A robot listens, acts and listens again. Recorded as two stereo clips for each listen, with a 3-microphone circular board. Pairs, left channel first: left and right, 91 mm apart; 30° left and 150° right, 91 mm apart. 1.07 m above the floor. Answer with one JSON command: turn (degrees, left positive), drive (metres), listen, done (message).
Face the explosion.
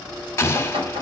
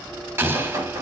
{"turn": 150}
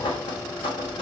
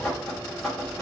{"done": "Facing where the explosion came from. I can't hear it now."}